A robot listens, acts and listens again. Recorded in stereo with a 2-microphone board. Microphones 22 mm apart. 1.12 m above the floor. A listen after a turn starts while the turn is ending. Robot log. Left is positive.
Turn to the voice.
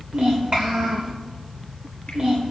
note: The child speaking: about 45° right or 135° right.
cmd yaw -45
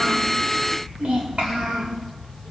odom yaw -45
note: So it is at 90° right.
cmd yaw -90
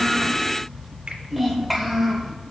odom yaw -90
note: The child speaking is now 10° right.
cmd yaw -10
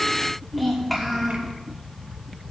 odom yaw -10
end: Facing the child speaking.